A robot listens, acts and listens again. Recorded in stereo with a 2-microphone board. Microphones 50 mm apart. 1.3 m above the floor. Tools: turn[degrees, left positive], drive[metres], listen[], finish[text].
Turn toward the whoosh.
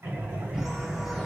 Action: turn[-30]
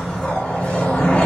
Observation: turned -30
Thought: So it is at 20° left.
Action: turn[20]
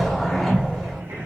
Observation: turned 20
Action: finish[Found it: a whoosh, straight ahead, 1 to 2 m away.]